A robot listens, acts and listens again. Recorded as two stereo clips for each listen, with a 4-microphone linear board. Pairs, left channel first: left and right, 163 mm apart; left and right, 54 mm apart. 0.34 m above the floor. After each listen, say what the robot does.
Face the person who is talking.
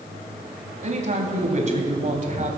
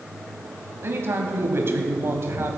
Turn 50° right.
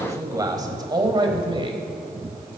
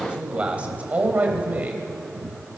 Turn 35° right.
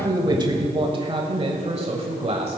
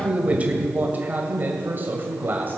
Turn 40° right.
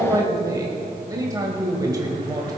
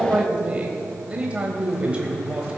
Turn 20° right.
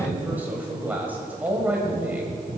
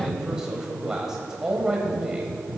Turn 10° right.
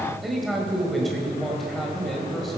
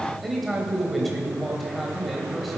Facing the man speaking.